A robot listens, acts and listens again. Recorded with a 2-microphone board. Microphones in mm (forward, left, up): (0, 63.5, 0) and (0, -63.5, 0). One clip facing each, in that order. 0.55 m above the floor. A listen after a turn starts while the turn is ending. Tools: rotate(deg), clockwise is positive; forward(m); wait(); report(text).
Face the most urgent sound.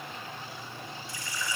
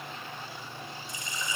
wait()
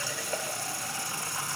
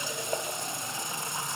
wait()
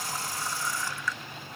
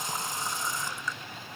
report("I can't make out anything urgent, only a running tap.")